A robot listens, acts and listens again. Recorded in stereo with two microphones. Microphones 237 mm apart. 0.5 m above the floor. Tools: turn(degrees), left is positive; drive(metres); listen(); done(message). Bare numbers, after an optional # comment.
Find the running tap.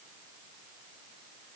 listen()
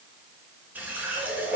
turn(-30)
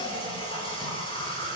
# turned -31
# So it is at 25° left.
turn(25)
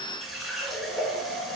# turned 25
done("Found it: a running tap, straight ahead, over 4 m away.")